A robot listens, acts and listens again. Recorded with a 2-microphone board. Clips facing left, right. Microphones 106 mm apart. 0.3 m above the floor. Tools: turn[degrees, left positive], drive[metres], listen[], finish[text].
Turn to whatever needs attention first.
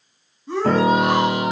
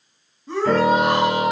Action: turn[30]
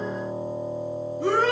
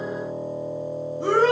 Thought: So it is at 30° right.
Action: turn[-30]
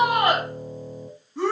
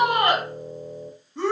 Action: finish[Found it: a shout, straight ahead.]